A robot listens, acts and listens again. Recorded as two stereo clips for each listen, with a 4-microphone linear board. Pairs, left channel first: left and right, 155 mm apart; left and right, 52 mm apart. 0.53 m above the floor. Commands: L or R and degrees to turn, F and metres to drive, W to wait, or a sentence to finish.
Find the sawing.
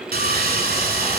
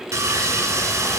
R70
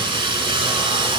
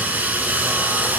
R35
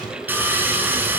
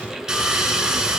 R15
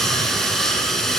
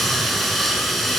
Facing the sawing.